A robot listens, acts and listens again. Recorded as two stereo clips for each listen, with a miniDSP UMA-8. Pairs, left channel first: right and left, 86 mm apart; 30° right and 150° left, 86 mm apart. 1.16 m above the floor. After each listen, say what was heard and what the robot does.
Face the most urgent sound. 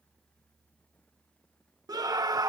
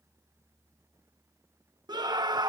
The scream: 120° left. Turn 120° left.
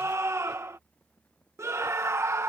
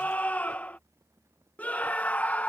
The scream is now 40° left. Turn 40° left.
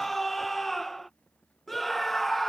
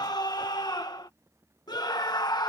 Facing the scream.